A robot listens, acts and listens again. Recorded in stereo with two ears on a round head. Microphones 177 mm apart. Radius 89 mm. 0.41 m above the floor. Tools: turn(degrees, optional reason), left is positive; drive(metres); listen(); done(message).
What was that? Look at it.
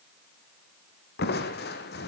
turn(degrees=55, reason="The crushing: about 55° left or 125° left.")
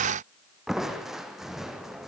done("Facing the crushing.")